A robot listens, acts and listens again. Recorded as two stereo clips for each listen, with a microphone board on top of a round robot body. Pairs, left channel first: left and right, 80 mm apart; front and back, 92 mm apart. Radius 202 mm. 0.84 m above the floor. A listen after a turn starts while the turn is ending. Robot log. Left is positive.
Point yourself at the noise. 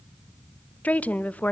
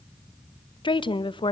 note: The woman speaking: 20° left.
cmd yaw +20
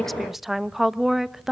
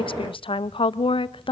end: Found it: a woman speaking, straight ahead.